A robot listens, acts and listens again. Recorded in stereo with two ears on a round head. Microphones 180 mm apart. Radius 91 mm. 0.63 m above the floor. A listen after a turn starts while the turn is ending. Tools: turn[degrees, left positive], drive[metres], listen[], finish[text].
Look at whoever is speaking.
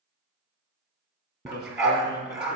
Thought: The man speaking: about 50° left or 130° left.
Action: turn[50]
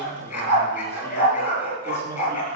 Thought: So it is at 15° left.
Action: turn[15]
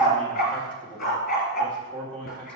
Action: finish[Found it: a man speaking, straight ahead.]